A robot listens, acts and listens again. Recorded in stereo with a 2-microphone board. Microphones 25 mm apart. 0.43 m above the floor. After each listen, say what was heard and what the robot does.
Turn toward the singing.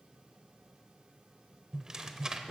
Keep listening.
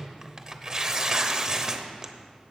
Keep listening.
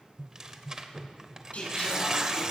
Turn 90° left.
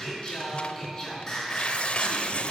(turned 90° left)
So it is at 15° left. Turn 15° left.
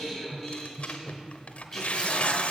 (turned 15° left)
Found it: singing, straight ahead.